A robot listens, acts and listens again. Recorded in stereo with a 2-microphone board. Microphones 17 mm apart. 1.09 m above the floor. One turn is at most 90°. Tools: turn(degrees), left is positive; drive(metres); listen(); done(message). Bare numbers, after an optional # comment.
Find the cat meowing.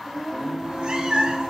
# The cat meowing: about 55° right or 125° right.
turn(-55)
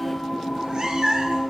# So it is at 50° right.
turn(-50)
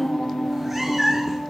# The cat meowing is now 20° right.
turn(-20)
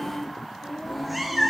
done("Found it: a cat meowing, straight ahead.")